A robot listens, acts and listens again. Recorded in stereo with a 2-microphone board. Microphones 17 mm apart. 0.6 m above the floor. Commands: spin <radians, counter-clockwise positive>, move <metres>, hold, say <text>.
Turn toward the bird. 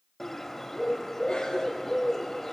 spin 0.26
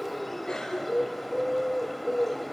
say Facing the bird, under 1 m away.